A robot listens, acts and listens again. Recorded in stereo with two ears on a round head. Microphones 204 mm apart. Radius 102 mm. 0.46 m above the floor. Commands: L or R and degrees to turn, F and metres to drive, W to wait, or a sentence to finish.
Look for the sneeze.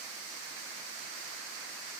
W
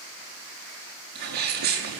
R45
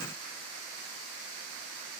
W
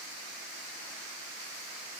I heard a sneeze, but can't make it out now. It was about straight ahead or 90° right.